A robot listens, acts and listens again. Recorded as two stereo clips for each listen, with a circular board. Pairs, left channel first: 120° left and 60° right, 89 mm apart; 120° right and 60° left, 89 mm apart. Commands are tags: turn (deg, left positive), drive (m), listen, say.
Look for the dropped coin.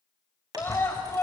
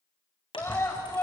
<turn deg="-105"/>
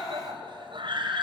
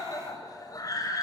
<say>I heard a dropped coin from this way, but can't make it out now.</say>